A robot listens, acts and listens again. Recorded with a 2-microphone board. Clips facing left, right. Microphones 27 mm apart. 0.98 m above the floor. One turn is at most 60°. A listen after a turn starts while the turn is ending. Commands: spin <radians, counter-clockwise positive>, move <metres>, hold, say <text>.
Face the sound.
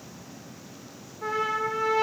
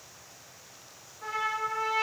spin 0.52
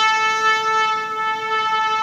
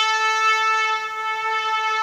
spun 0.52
spin 1.05
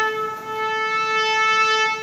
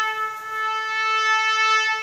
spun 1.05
spin 1.05
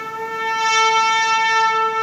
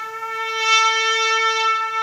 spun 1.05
say Facing the trumpet.